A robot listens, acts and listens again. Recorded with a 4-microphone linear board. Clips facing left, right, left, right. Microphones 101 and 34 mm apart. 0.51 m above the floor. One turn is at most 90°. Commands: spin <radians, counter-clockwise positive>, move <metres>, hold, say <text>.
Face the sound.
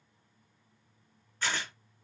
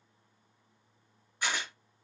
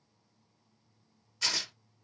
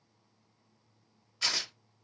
spin -0.52
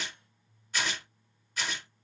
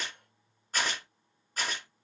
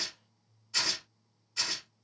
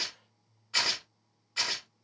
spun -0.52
spin -1.57
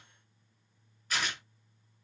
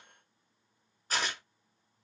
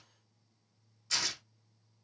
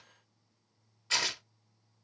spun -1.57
spin -0.61
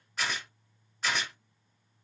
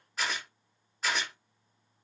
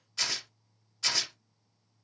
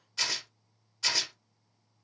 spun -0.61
say Facing the tearing paper, 1 to 2 m away.